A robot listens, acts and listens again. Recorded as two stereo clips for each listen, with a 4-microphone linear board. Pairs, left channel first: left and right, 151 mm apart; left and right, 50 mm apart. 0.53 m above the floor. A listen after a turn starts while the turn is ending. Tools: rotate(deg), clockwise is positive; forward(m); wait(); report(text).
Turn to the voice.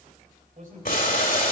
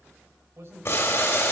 rotate(65)
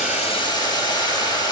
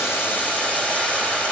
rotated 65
wait()
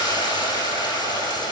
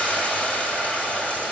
wait()
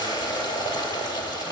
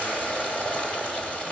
report("I heard a man speaking, but can't make it out now. It was about straight ahead or 50° right.")